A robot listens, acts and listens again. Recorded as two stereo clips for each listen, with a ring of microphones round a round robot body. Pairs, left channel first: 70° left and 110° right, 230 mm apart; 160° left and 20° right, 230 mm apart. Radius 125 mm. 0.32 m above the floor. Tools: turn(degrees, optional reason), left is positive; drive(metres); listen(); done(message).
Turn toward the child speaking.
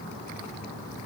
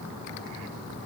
listen()
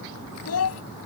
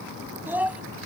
turn(degrees=60, reason="The child speaking: 60° left.")
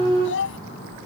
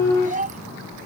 turn(degrees=35, reason="The child speaking is now 35° left.")
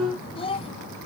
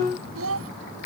done("Found it: a child speaking, straight ahead.")